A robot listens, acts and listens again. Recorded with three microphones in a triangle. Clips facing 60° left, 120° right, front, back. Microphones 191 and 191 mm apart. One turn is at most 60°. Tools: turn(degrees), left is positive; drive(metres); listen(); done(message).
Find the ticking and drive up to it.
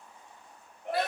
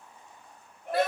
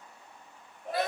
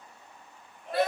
listen()
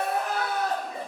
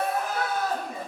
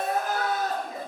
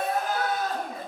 listen()
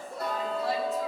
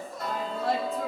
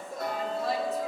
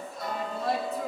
turn(degrees=10)
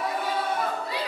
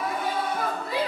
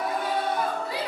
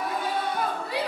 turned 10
listen()
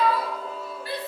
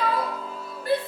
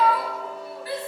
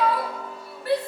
drive(metres=1.0)
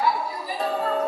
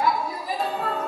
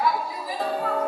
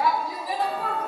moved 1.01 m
drive(metres=1.0)
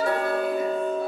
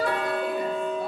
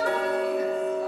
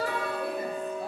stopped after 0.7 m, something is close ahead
turn(degrees=15)
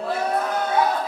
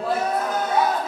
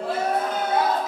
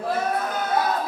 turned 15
listen()
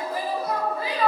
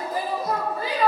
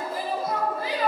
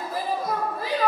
listen()
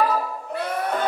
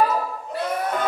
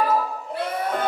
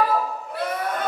done("I am next to the ticking.")